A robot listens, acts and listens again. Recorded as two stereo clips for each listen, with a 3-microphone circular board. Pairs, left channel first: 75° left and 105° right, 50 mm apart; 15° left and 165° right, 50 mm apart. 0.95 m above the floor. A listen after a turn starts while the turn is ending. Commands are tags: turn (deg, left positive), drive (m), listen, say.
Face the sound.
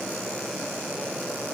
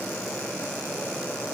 <listen/>
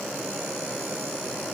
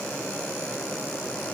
<listen/>
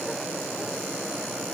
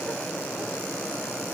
<say>I can't make out anything to turn to.</say>